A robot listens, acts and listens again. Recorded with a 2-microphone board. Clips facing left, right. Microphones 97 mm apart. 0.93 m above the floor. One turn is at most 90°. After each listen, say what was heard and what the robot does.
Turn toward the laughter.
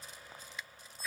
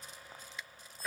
Keep listening.
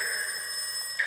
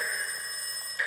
Keep listening.
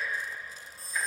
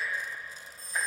I can't make out laughter to turn to.